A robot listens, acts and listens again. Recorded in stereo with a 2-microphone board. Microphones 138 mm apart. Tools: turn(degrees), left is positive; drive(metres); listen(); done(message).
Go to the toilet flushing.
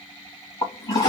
turn(degrees=30)
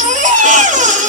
listen()
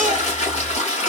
turn(degrees=120)
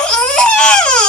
listen()
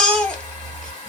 turn(degrees=30)
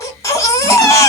listen()
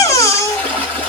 turn(degrees=10)
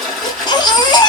drive(metres=1.0)
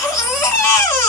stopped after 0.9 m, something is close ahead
listen()
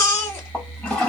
done("Arrived at the toilet flushing, straight ahead.")